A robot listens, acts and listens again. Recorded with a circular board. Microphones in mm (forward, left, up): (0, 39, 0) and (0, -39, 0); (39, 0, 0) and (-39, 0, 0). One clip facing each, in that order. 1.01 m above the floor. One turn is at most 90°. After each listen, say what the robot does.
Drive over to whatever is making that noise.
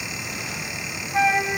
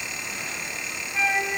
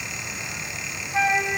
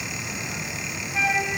Turn 45° left.
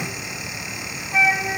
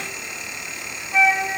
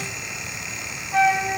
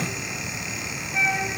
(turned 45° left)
Drive 1.0 m forward.
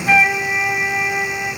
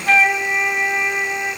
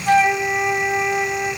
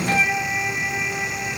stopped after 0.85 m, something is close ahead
I am next to the flute.